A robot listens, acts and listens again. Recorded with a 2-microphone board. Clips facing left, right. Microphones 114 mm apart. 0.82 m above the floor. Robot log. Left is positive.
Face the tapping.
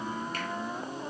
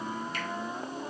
cmd idle
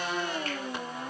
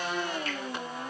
cmd idle
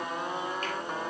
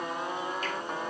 end: I can't make out tapping.